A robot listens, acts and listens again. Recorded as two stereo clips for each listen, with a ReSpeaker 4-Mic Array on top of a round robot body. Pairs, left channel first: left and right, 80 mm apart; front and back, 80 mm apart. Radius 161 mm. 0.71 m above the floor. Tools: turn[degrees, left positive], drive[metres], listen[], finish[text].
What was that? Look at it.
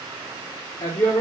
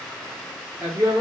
Thought: The woman speaking: 110° left.
Action: turn[110]
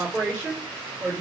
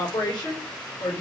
Thought: The woman speaking is now 25° right.
Action: turn[-25]
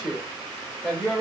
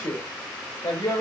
Action: finish[Facing the woman speaking, 2 to 4 m away.]